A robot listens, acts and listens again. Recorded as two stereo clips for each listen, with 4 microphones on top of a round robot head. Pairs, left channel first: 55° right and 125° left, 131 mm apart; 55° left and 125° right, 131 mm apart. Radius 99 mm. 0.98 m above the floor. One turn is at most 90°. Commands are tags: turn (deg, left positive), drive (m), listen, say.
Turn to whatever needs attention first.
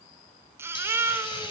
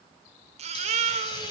<turn deg="-90"/>
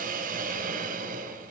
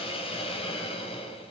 <turn deg="-75"/>
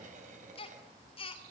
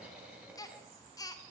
<say>Found it: a baby crying, straight ahead, 2 to 4 m away.</say>